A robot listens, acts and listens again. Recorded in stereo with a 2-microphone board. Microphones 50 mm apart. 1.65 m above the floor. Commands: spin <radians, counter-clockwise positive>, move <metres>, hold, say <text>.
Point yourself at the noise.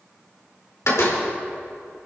spin 1.31
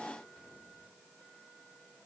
hold
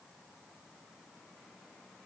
say I heard a door slam, but can't make it out now. It was about straight ahead or 30° left.